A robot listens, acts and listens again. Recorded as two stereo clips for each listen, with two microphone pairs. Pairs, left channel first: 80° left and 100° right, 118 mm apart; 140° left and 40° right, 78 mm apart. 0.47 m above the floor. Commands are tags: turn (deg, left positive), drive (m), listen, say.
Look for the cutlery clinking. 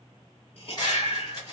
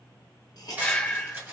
<turn deg="30"/>
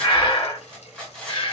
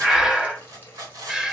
<say>Found it: cutlery clinking, straight ahead, 1 to 2 m away.</say>